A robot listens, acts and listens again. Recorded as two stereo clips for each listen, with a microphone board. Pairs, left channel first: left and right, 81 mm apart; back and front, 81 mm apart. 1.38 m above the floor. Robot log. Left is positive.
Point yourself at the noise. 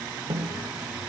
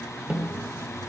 note: The snare drum: 75° right.
cmd yaw -75
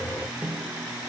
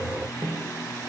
end: Facing the snare drum.